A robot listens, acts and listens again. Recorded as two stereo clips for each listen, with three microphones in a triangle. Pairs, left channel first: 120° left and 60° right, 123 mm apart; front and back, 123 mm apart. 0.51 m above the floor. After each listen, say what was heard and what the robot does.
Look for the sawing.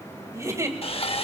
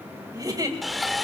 The sawing: 90° left. Turn 90° left.
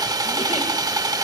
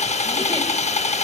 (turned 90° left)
Found it: sawing, straight ahead.